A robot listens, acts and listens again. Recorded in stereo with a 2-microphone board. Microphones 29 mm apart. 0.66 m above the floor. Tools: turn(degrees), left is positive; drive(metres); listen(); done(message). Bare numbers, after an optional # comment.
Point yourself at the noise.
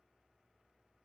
listen()
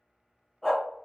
# The dog barking: about 15° left or 165° left.
turn(15)
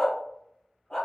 # So it is at 150° left.
turn(150)
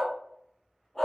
# The dog barking is now 15° left.
turn(15)
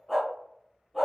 done("Facing the dog barking, 1 to 2 m away.")